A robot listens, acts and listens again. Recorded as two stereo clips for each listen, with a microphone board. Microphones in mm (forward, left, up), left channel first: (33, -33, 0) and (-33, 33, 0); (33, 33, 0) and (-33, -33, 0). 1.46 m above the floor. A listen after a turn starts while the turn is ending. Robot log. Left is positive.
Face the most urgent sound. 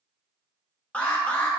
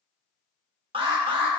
note: The alarm: 120° right.
cmd yaw -120
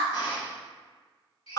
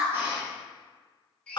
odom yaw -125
end: Facing the alarm.